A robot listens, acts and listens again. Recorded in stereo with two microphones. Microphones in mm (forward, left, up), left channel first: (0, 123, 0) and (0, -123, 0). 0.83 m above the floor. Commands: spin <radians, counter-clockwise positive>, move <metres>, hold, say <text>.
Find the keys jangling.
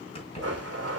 spin 0.44
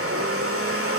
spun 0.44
hold
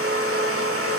hold
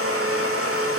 say I heard keys jangling, but can't make it out now. It was about straight ahead or 130° left.